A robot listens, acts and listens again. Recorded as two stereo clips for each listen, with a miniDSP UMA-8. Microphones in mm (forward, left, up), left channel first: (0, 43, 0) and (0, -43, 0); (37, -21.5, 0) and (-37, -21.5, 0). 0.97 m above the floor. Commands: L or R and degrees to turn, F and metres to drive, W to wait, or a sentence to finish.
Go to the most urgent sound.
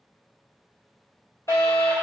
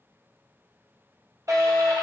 L140
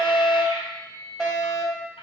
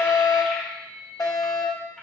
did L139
F1.0
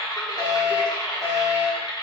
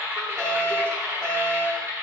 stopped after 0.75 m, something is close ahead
Arrived at the fire alarm, straight ahead.